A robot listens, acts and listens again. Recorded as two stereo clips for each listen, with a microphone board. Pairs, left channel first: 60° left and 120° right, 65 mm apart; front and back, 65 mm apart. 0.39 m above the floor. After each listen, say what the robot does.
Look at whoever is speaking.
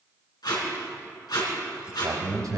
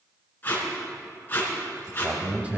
Turn 110° right.
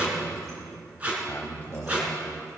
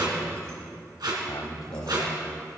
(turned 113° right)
Found it: a man speaking, straight ahead, 1 to 2 m away.